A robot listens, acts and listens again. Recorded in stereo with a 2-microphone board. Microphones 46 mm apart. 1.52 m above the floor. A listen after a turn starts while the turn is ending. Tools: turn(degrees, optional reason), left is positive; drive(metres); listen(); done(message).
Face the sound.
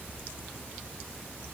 listen()
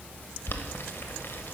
turn(degrees=60, reason="The boiling: about 60° left or 120° left.")
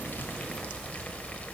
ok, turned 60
turn(degrees=35, reason="So it is at 35° left.")
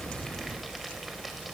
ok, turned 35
done("Found it: boiling, straight ahead.")